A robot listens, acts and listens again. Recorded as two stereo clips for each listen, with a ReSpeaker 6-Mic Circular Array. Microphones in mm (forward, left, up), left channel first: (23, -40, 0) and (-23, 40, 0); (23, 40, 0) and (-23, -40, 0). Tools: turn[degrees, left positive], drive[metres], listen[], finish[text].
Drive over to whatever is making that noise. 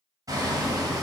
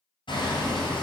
Thought: The hammering: 75° left.
Action: turn[75]
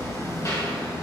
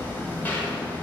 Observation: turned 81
Thought: The hammering is now 10° right.
Action: turn[-10]
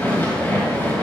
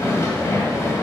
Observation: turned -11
Action: drive[1.0]
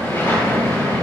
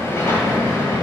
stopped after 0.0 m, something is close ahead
Action: finish[Something is in my way. I am facing the hammering but have not reached it.]